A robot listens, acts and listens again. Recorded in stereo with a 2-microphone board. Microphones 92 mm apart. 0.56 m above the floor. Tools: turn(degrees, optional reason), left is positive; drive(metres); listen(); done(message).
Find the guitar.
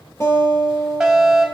turn(degrees=30, reason="The guitar: about 30° left or 150° left.")
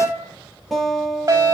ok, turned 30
done("Facing the guitar.")